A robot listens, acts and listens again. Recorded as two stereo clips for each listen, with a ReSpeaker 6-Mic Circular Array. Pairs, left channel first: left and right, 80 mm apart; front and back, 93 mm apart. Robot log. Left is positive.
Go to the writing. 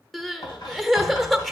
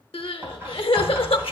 note: The writing: 115° left.
cmd yaw +115
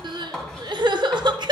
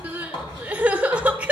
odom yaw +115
cmd fwd 1.0
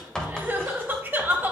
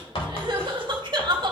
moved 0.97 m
note: The writing is now 10° left.
cmd yaw +10
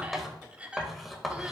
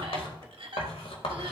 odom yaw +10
cmd fwd 1.0
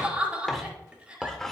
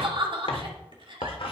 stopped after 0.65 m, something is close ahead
end: Arrived at the writing, straight ahead.